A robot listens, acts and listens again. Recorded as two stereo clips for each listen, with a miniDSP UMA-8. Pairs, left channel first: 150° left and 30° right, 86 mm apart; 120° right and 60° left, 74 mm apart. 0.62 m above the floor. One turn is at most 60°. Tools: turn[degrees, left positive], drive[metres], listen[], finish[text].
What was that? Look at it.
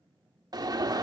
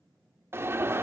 Action: finish[Found it: an alarm, straight ahead, under 1 m away.]